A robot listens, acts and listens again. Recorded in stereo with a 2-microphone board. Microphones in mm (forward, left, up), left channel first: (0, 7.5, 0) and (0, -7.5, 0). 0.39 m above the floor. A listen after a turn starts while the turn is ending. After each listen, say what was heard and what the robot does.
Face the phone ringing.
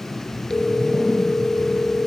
The phone ringing: about 30° left or 150° left. Turn 30° left.
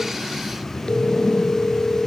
So it is at 120° left. Turn 120° left.
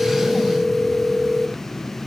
Found it: a phone ringing, straight ahead.